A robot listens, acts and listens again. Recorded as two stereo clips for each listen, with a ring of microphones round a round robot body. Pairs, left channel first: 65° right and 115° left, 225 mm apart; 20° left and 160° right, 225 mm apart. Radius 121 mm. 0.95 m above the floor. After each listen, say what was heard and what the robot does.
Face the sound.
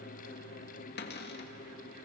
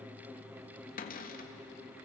The cupboard door: 30° right. Turn 30° right.
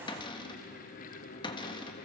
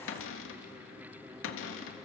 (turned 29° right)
Facing the cupboard door.